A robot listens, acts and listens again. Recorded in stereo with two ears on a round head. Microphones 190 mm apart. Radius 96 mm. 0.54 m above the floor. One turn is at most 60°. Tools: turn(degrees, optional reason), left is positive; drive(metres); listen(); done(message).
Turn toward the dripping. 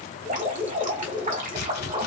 turn(degrees=-40, reason="The dripping: about 40° right or 140° right.")
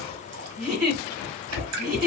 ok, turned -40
turn(degrees=-60, reason="So it is at 100° right.")
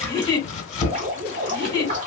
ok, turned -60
turn(degrees=-35, reason="The dripping is now 35° right.")
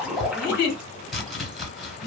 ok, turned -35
done("Found it: dripping, straight ahead.")